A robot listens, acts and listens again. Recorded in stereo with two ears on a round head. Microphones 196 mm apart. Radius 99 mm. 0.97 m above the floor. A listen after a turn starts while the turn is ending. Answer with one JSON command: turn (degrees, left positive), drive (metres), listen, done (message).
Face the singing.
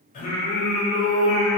{"turn": 25}
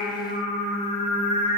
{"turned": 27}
{"turn": 30}
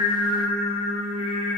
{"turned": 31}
{"turn": 35}
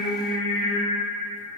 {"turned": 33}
{"turn": 125}
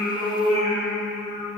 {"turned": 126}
{"turn": 10}
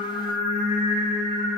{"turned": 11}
{"done": "Found it: singing, straight ahead."}